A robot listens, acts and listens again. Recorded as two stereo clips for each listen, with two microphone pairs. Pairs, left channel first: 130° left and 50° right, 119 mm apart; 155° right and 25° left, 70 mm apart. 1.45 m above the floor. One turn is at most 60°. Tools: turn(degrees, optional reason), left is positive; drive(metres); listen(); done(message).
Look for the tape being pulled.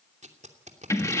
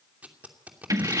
turn(degrees=-45, reason="The tape being pulled: 45° right.")
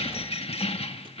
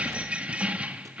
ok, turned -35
turn(degrees=-10, reason="Nothing new. It was at 10° right.")
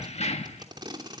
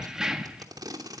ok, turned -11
done("Facing the tape being pulled, 2 to 4 m away.")